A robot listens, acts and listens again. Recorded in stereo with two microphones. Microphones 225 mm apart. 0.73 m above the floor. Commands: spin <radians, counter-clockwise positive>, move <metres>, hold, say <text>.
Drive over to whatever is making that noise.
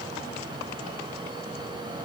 hold
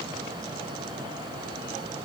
hold
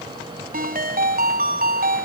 spin -0.70
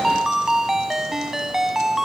move 1.0
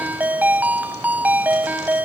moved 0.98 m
move 1.0
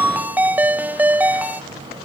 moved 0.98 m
spin -0.17
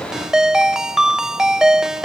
move 1.0
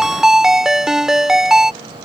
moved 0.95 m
move 1.0
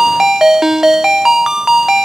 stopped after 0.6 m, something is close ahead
say I am next to the ringtone.